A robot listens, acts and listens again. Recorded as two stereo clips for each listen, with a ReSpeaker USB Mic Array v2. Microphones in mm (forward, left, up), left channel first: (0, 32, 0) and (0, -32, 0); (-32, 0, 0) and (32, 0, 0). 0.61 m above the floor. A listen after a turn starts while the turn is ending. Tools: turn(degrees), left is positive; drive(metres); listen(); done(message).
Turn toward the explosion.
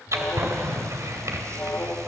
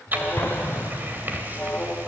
turn(degrees=-130)
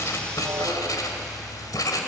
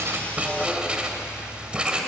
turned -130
done("I heard an explosion from this way, but can't make it out now.")